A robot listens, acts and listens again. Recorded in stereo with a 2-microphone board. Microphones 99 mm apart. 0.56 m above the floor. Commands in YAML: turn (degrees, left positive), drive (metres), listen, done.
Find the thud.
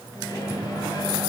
listen: true
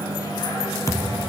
turn: 30
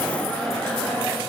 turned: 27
listen: true
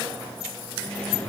done: "I heard a thud, but can't make it out now. It was about 5° left or 125° left."